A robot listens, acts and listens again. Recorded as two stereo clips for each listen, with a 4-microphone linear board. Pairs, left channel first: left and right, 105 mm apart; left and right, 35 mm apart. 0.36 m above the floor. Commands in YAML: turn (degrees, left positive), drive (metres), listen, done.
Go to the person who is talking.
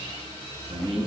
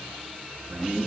turn: -70
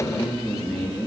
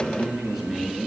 drive: 1.0
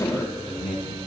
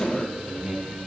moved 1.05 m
drive: 1.0
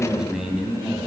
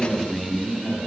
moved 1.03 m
drive: 1.0
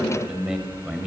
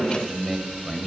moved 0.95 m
drive: 1.0
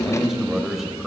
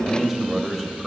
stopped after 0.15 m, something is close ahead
done: "I am next to the man speaking."